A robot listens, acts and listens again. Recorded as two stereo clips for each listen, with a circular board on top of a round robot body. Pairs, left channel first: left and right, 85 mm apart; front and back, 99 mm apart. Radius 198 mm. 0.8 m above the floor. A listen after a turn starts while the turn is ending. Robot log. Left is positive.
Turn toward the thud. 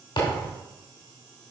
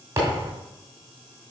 note: The thud: 115° left.
cmd yaw +115
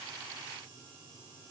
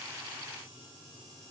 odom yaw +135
note: Nothing new. It was at 20° right.
cmd yaw -20
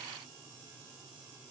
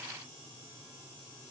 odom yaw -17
end: I heard a thud from this way, but can't make it out now.